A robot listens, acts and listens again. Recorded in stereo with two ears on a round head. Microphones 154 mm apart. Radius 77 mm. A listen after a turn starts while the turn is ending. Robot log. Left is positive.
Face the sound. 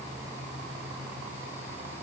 cmd idle
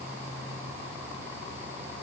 cmd idle
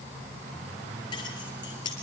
note: The keys jangling: about 25° left or 155° left.
cmd yaw +25
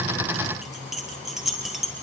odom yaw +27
end: Facing the keys jangling, over 4 m away.